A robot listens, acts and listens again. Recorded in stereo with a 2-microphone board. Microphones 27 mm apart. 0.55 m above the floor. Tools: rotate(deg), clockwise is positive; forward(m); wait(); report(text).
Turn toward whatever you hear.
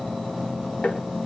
rotate(-55)
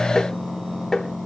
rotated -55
rotate(-20)
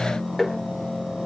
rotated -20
report("Found it: tapping, straight ahead.")